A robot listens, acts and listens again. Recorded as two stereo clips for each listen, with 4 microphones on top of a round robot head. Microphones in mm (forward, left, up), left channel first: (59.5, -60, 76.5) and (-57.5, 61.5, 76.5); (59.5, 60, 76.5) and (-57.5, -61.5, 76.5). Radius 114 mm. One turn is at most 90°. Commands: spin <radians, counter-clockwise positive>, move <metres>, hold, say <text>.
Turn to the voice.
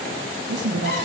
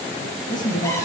spin 1.57
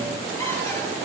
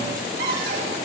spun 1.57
spin 0.35
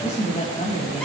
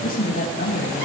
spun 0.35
say Found it: a woman speaking, straight ahead.